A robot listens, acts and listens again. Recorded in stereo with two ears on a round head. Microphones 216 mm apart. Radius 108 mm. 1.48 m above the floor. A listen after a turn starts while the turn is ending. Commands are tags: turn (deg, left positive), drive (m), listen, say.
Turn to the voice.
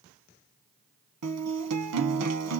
<listen/>
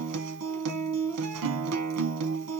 <listen/>
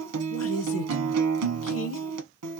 <turn deg="65"/>
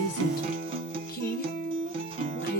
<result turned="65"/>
<turn deg="45"/>
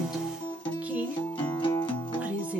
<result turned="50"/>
<say>Facing the woman speaking, 1 to 2 m away.</say>